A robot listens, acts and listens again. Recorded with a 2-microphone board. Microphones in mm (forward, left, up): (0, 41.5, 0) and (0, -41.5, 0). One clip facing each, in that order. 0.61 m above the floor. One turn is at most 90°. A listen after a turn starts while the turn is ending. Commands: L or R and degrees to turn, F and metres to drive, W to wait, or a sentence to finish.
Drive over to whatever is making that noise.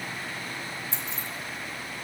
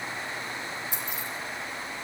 R15
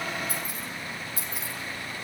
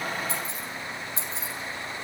R90
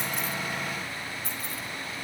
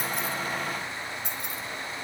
R90
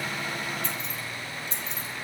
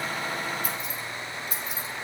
R10
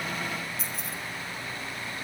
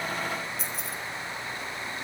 F1.0
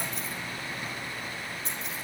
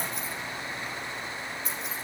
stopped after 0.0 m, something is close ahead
Something is in my way. I am facing the keys jangling but have not reached it.